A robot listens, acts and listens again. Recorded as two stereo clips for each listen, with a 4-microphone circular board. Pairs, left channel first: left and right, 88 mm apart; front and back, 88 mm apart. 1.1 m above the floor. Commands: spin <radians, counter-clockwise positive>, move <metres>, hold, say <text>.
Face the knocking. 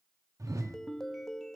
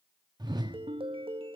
hold
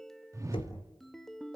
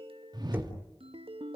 spin 1.92
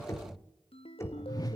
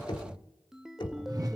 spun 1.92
spin 0.52
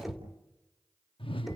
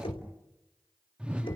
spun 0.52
say Found it: knocking, straight ahead.